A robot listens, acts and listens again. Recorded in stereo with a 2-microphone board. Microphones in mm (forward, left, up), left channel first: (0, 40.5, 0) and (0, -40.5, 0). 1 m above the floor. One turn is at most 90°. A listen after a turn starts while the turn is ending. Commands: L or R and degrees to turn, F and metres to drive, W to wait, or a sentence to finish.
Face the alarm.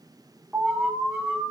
R30
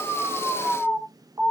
R90
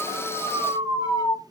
R85
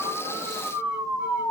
R20
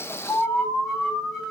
Found it: an alarm, straight ahead, over 4 m away.